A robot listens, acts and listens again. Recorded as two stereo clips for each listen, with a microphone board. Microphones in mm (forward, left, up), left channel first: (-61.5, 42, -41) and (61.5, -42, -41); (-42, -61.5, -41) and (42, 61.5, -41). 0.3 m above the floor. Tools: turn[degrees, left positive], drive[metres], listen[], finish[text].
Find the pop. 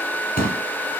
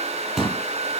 Thought: The pop: 145° left.
Action: turn[145]
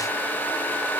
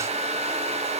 Action: finish[Facing where the pop came from. I can't hear it now.]